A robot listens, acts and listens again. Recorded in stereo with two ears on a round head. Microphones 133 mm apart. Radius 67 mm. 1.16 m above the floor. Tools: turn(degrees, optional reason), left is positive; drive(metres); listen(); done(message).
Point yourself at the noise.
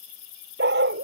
turn(degrees=-90)
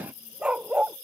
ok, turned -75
done("Facing the dog barking.")